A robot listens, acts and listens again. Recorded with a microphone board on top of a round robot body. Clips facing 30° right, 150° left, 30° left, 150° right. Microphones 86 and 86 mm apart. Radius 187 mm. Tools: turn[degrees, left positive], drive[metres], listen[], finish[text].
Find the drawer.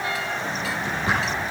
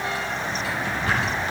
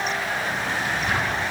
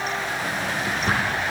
Thought: The drawer: 100° right.
Action: turn[-100]
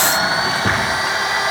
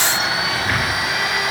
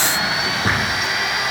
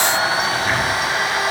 Thought: The drawer is now 15° right.
Action: turn[-15]
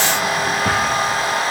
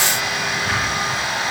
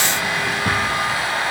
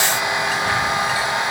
Action: listen[]
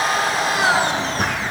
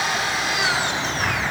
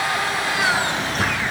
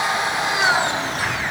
Action: finish[Found it: a drawer, straight ahead, over 4 m away.]